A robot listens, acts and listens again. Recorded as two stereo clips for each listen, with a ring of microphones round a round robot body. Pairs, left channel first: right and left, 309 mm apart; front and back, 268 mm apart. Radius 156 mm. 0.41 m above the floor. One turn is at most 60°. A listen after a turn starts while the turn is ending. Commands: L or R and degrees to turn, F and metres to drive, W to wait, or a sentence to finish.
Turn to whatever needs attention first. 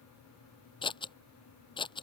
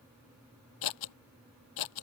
W
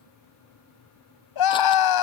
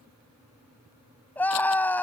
R60
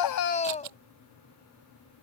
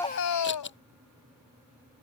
R20
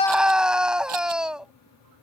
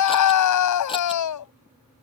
Found it: a scream, straight ahead.